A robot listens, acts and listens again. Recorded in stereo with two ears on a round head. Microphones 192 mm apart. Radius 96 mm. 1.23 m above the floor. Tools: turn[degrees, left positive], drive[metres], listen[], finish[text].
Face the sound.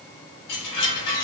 Action: turn[90]
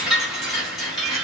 Action: finish[Found it: a chime, straight ahead.]